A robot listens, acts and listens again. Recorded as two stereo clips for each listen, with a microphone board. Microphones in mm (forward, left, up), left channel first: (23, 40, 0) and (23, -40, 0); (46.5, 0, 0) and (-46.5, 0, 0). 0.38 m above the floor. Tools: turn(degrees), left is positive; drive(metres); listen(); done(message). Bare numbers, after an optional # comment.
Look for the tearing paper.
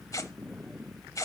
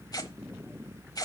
# The tearing paper: 45° left.
turn(45)
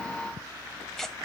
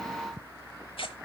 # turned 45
done("Found it: tearing paper, straight ahead.")